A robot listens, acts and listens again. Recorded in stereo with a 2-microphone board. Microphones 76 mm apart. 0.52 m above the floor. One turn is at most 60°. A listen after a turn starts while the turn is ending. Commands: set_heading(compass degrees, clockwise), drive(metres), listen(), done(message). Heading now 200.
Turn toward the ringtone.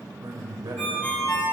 set_heading(180)
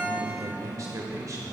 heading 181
listen()
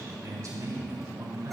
listen()
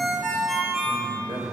done("Found it: a ringtone, straight ahead.")